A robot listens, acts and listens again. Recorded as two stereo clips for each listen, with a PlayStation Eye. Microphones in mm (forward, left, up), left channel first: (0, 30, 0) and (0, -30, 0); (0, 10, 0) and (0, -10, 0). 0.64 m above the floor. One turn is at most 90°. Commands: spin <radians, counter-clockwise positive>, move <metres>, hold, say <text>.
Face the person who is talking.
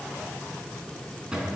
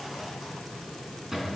hold
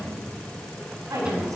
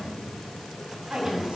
spin -1.22
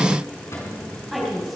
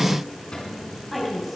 say Found it: a woman speaking, straight ahead.